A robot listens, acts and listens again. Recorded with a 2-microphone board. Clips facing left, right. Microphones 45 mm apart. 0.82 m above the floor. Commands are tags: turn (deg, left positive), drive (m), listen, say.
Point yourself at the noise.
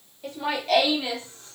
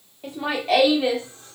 <turn deg="-20"/>
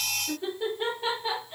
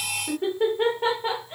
<turn deg="-135"/>
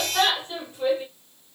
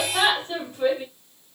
<turn deg="-35"/>
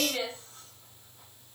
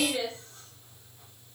<turn deg="20"/>
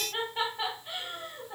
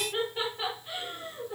<say>Facing the laughter, over 4 m away.</say>